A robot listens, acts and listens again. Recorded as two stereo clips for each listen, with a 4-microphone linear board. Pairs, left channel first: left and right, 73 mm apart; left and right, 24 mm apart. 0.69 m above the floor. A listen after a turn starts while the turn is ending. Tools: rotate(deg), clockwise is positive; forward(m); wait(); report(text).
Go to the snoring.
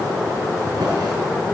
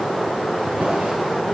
wait()
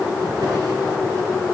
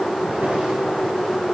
wait()
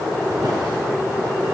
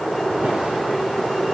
report("I can't make out snoring.")